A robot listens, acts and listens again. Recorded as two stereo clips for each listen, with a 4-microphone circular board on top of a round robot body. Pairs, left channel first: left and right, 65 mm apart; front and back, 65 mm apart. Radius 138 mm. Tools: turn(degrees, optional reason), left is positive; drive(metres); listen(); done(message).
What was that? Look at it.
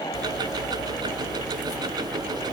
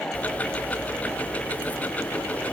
turn(degrees=-70, reason="The ticking: 70° right.")
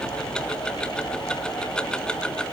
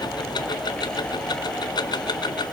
turn(degrees=15, reason="The ticking is now 15° left.")
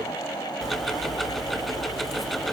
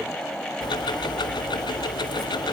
done("Facing the ticking, 1 to 2 m away.")